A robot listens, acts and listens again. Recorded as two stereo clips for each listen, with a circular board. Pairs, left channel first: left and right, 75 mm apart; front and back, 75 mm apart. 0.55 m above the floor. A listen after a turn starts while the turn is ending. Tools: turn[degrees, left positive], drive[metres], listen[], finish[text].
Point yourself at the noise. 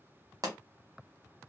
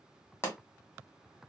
Thought: The pop: 55° right.
Action: turn[-55]
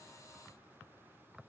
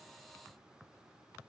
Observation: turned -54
Action: finish[I heard a pop from this way, but can't make it out now.]